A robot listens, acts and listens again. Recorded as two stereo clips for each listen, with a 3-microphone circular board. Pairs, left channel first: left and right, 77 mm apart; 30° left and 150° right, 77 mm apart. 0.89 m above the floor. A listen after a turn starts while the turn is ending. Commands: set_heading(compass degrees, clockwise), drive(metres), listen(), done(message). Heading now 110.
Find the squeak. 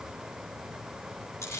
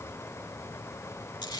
listen()
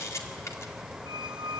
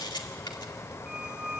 set_heading(180)
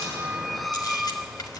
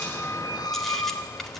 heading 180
done("Facing the squeak, under 1 m away.")